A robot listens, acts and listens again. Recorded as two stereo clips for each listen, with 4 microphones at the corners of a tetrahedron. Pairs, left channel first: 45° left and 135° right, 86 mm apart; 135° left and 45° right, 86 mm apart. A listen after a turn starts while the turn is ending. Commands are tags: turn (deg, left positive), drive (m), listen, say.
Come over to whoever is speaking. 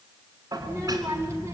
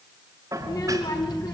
<turn deg="165"/>
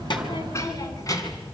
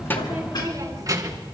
<drive m="1.0"/>
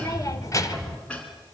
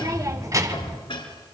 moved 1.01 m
<drive m="1.0"/>
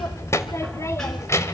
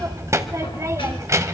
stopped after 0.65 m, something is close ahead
<say>I am next to the child speaking.</say>